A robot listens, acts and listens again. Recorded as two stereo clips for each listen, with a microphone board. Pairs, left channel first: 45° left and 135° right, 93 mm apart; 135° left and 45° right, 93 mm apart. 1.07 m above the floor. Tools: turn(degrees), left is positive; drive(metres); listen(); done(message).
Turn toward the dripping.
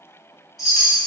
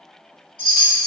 listen()
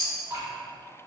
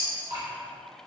turn(degrees=-80)
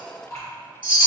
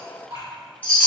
done("Facing the dripping, 1 to 2 m away.")